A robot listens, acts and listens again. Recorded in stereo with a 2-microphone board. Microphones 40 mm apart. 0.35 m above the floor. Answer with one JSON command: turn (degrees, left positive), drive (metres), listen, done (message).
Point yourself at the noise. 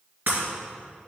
{"turn": -60}
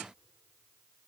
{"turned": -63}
{"listen": true}
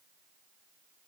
{"done": "I heard breaking glass, but can't make it out now. It was about straight ahead or 55° right."}